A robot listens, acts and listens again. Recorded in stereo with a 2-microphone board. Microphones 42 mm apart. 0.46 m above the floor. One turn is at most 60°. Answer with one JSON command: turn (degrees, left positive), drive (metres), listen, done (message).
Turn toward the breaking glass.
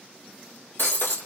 {"turn": 60}
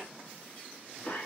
{"listen": true}
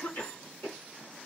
{"done": "I heard breaking glass, but can't make it out now. It was about 5° left or 55° left."}